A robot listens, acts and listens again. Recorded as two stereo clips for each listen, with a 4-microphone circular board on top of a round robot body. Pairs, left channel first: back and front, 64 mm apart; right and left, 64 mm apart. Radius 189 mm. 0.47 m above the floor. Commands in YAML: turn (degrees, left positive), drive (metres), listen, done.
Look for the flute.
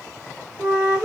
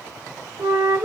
turn: 65
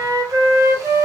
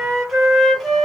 done: "Facing the flute, 1 to 2 m away."